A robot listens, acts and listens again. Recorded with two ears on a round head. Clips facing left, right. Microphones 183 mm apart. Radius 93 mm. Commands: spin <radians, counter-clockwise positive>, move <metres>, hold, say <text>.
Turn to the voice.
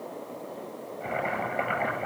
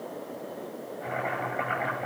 hold
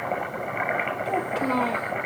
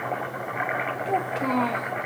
spin 0.52
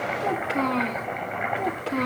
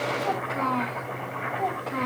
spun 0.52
spin 2.44
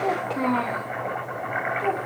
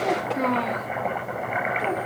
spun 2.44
spin -0.17
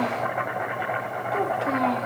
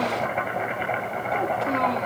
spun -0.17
say Facing the child speaking.